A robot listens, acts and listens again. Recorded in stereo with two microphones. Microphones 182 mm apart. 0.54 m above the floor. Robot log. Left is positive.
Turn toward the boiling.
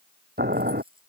note: The boiling: about 60° right or 120° right.
cmd yaw -60
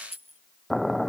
end: Found it: boiling, straight ahead.